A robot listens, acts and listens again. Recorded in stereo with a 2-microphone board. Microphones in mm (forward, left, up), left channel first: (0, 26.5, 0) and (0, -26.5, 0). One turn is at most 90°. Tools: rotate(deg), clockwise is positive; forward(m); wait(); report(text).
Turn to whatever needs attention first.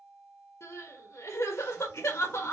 rotate(-60)
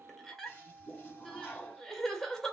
report("Found it: crying, straight ahead.")